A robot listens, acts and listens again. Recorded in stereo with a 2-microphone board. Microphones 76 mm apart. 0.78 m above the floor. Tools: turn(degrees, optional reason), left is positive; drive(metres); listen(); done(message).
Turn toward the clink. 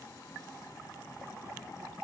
listen()
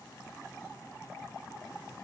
listen()
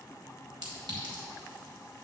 turn(degrees=-90)
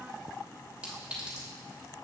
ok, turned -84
turn(degrees=-15, reason="So it is at 15° right.")
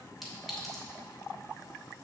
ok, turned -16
done("Facing the clink, 1 to 2 m away.")